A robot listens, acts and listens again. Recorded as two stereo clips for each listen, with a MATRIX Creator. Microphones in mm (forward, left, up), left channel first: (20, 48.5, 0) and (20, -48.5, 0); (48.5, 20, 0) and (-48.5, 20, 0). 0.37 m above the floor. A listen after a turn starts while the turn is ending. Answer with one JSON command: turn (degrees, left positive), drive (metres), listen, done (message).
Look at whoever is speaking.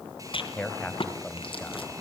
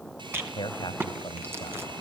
{"turn": 15}
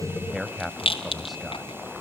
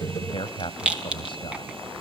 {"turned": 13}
{"done": "Found it: a man speaking, straight ahead."}